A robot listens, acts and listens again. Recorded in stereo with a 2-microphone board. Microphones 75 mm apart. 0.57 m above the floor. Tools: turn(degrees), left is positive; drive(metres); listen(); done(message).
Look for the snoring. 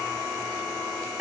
listen()
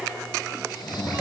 turn(degrees=65)
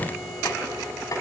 listen()
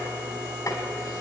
listen()
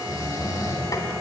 turn(degrees=50)
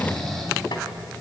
done("Found it: snoring, straight ahead, over 4 m away.")